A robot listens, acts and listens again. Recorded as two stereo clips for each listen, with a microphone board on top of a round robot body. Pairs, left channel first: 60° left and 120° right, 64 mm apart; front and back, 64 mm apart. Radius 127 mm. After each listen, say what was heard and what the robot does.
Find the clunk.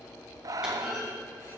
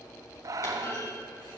The clunk: 40° right. Turn 40° right.
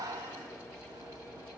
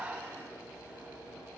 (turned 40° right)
Facing where the clunk came from. I can't hear it now.